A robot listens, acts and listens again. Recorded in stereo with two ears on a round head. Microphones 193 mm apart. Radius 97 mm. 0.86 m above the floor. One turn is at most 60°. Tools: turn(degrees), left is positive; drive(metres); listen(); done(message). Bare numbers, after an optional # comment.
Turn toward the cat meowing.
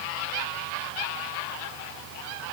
listen()
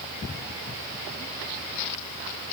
listen()
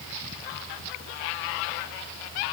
done("I can't make out a cat meowing.")